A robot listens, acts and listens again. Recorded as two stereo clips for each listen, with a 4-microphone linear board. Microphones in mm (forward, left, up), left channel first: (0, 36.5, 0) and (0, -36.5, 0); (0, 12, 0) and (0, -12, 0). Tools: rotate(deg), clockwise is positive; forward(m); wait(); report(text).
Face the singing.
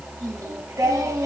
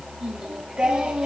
rotate(45)
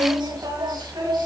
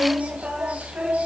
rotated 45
rotate(85)
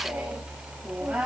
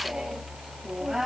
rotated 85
rotate(15)
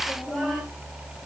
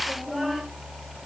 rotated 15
report("Found it: singing, straight ahead, 2 to 4 m away.")